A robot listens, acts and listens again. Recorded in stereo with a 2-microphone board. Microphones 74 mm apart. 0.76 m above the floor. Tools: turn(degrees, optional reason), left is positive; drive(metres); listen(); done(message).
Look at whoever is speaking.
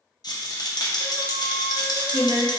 turn(degrees=30)
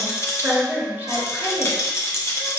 turn(degrees=-30, reason="So it is at 30° right.")
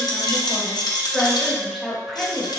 done("Facing the woman speaking, 1 to 2 m away.")